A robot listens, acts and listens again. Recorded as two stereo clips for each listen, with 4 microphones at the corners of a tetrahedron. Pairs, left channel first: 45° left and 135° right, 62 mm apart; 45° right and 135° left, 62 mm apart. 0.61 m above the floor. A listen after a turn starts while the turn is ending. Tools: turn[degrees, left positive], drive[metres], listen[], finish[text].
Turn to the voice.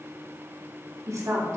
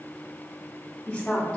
Thought: The woman speaking: 115° right.
Action: turn[-115]
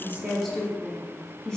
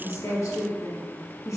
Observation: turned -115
Thought: The woman speaking is now 35° right.
Action: turn[-35]
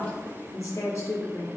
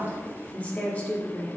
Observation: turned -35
Thought: The woman speaking is now 15° left.
Action: turn[15]
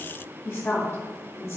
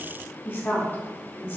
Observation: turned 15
Action: finish[Found it: a woman speaking, straight ahead, 1 to 2 m away.]